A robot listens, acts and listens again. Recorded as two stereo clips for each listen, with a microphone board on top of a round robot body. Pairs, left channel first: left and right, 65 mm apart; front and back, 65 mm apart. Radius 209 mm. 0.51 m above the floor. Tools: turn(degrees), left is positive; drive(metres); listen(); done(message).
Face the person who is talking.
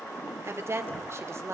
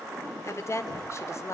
turn(degrees=-45)
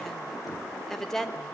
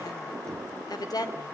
done("Found it: a woman speaking, straight ahead, 2 to 4 m away.")